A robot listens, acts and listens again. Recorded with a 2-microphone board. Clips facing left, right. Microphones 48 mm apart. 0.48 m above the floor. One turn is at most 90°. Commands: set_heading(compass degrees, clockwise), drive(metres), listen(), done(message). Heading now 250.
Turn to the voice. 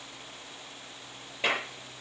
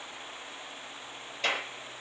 listen()
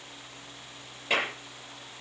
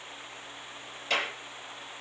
listen()
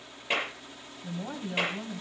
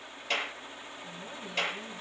set_heading(195)
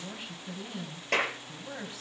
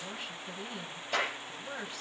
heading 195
done("Facing the woman speaking, 2 to 4 m away.")